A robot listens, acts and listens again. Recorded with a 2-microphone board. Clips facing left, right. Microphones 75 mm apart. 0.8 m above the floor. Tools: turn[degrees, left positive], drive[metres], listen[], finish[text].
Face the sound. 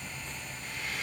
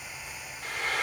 Thought: The frying: about 70° right or 110° right.
Action: turn[-70]
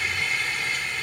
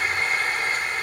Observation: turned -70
Thought: So it is at 40° right.
Action: turn[-40]
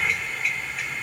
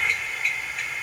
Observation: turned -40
Action: finish[Found it: frying, straight ahead.]